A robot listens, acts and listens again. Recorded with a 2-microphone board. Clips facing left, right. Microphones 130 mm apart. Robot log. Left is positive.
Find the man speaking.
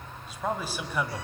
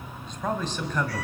cmd yaw +30
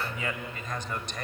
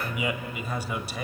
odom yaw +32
end: Found it: a man speaking, straight ahead, 1 to 2 m away.